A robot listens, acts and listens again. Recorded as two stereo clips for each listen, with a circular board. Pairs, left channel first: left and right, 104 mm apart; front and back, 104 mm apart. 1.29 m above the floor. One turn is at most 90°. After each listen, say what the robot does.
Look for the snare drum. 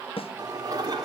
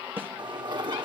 Turn 90° left.
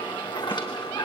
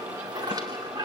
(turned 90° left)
Turn 20° left.
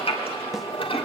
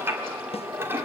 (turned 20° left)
Keep listening.
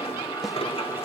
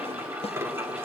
Facing where the snare drum came from. I can't hear it now.